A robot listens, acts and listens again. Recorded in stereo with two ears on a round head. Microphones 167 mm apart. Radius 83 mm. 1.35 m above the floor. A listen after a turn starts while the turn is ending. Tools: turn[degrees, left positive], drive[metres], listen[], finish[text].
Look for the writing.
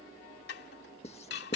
Thought: The writing: about 35° left or 145° left.
Action: turn[35]
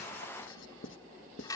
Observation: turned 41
Thought: So it is at 105° left.
Action: turn[105]
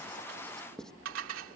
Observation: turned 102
Action: finish[Found it: writing, straight ahead.]